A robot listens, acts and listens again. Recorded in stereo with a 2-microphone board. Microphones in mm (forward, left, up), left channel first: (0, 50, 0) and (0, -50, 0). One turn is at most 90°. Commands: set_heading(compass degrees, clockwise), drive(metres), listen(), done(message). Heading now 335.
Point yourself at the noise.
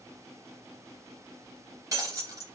set_heading(10)
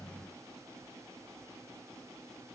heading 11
listen()
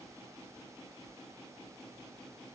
done("I heard breaking glass, but can't make it out now. It was about straight ahead or 110° right.")